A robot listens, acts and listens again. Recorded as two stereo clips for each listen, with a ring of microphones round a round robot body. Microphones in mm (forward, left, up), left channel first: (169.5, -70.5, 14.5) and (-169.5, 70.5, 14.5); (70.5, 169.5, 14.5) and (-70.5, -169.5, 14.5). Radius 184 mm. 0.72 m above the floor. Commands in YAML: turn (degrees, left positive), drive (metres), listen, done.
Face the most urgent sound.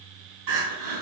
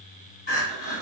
turn: 130
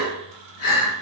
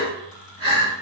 turn: -35
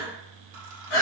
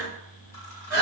done: "Found it: crying, straight ahead."